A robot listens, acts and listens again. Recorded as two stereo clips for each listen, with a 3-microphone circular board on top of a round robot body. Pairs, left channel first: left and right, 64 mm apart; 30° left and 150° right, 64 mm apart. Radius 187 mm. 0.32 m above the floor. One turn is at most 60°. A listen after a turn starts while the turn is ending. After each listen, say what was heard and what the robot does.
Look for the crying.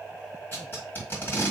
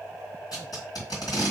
Keep listening.
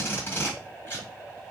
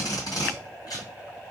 Keep listening.
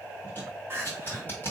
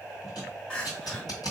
The crying: 40° right. Turn 40° right.
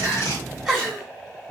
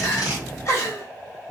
Facing the crying, 1 to 2 m away.